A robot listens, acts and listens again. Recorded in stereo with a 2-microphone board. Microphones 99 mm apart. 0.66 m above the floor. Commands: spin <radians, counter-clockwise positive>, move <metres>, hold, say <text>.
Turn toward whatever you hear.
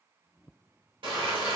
spin -1.05
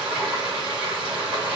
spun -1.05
spin -0.17
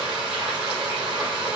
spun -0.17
spin -0.17
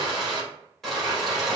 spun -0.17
say Facing the frying.